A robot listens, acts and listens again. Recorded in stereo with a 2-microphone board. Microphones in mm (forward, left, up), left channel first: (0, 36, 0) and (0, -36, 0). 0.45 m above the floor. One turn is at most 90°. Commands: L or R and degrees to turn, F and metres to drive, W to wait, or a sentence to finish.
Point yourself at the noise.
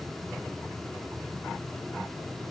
W
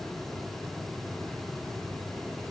W
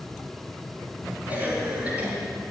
R20
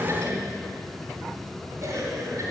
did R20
R90
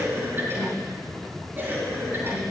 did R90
R30
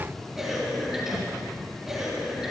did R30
Facing the cough.